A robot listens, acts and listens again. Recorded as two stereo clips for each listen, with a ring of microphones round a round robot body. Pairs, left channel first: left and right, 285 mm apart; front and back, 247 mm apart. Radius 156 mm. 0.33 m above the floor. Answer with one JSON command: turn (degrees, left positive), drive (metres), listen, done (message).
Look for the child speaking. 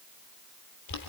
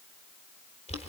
{"listen": true}
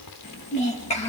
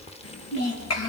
{"turn": 20}
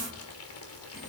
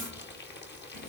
{"listen": true}
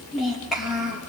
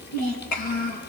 {"done": "Found it: a child speaking, straight ahead."}